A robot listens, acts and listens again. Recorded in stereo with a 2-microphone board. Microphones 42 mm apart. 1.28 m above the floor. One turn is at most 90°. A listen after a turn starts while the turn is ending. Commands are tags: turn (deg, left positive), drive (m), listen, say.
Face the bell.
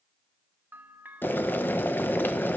<turn deg="-55"/>
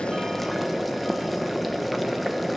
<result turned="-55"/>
<listen/>
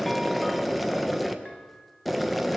<listen/>
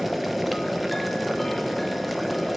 <say>I heard a bell, but can't make it out now. It was about straight ahead or 70° right.</say>